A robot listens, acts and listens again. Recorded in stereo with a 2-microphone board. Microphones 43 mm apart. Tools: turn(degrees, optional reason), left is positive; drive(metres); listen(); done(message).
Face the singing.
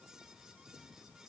listen()
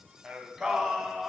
turn(degrees=30)
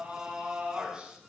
turn(degrees=-20, reason="So it is at 20° right.")
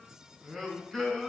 turn(degrees=10, reason="The singing is now 10° left.")
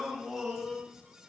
done("Facing the singing, over 4 m away.")